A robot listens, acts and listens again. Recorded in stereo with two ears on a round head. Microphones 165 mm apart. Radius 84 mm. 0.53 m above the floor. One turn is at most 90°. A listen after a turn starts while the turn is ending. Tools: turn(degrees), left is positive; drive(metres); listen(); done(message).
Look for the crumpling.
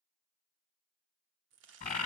turn(degrees=-70)
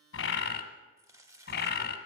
turn(degrees=-15)
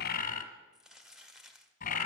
done("Facing the crumpling.")